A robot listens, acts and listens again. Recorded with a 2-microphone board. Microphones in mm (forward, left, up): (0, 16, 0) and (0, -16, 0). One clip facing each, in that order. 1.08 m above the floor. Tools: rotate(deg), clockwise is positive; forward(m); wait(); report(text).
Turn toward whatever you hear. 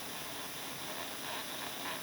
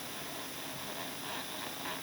wait()
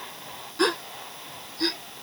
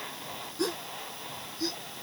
rotate(-50)
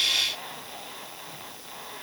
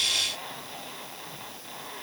wait()
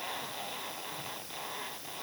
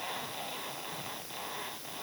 report("I heard a gasp, but can't make it out now. It was about straight ahead or 80° left.")